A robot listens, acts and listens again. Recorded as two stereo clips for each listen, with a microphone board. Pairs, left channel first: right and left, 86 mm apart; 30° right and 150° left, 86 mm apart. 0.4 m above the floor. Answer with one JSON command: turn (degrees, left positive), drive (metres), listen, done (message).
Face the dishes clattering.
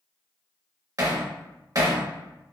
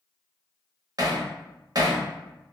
{"listen": true}
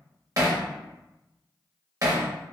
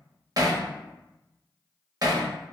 {"listen": true}
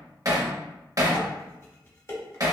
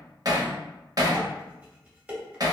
{"turn": -135}
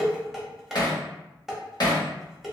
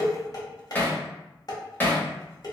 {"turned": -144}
{"done": "Facing the dishes clattering."}